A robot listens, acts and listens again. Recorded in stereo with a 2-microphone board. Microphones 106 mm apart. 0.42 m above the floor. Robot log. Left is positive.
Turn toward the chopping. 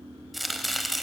cmd yaw +30
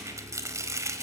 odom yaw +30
note: So it is at 30° right.
cmd yaw -30
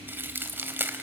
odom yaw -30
note: The chopping is now 20° right.
cmd yaw -20
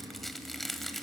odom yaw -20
end: Facing the chopping, 1 to 2 m away.